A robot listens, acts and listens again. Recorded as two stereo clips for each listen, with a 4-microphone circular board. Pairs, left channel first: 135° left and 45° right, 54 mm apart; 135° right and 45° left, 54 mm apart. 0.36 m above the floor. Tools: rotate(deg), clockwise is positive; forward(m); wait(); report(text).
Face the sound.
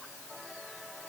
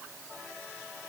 wait()
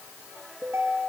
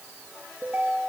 rotate(25)
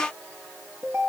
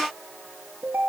rotate(10)
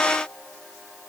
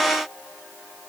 wait()
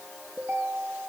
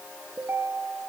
report("Found it: a ringtone, straight ahead.")